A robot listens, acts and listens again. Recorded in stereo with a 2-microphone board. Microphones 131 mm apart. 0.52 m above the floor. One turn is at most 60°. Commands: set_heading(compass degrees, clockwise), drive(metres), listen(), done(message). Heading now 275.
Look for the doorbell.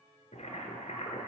listen()
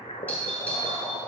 set_heading(245)
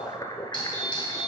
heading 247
set_heading(187)
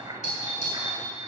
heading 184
set_heading(124)
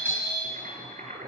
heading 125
set_heading(110)
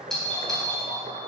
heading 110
done("Facing the doorbell, 2 to 4 m away.")